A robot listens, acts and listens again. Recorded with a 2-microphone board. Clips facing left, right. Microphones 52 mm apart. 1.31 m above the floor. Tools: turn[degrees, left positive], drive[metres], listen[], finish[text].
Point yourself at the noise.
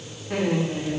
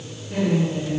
Thought: The laughter: about 75° left or 105° left.
Action: turn[75]
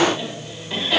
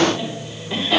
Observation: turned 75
Action: finish[Facing the laughter, over 4 m away.]